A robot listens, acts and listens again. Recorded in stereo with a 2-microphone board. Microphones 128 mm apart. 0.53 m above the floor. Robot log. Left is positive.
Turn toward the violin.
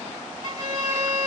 note: The violin: about 35° right or 145° right.
cmd yaw -35
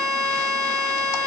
end: Facing the violin, 1 to 2 m away.